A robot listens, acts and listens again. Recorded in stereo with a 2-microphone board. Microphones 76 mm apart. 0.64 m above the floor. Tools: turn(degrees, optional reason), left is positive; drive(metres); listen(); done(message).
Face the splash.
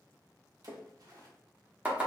turn(degrees=-55, reason="The splash: about 55° right or 125° right.")
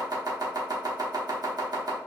listen()
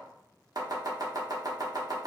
done("I heard a splash, but can't make it out now. It was about straight ahead or 70° right.")